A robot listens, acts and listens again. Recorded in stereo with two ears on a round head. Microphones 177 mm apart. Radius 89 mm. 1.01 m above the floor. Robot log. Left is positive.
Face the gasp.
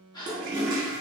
note: The gasp: about 20° left or 160° left.
cmd yaw +20
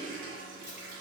cmd idle
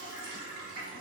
end: I heard a gasp, but can't make it out now. It was about straight ahead or 140° left.